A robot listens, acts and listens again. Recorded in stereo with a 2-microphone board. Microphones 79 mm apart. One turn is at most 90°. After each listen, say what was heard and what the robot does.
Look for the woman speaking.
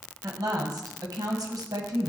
The woman speaking: about 55° right or 125° right. Turn 55° right.
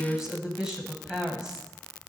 So it is at 10° right. Turn 10° right.
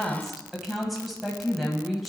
Facing the woman speaking, 1 to 2 m away.